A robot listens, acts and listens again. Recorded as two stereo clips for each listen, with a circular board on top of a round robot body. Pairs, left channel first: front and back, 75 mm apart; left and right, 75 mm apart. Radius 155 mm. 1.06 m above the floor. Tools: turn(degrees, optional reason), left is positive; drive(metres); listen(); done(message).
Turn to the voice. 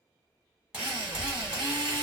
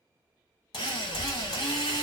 turn(degrees=65, reason="The child speaking: 65° left.")
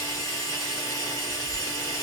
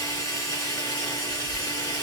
done("Facing the child speaking.")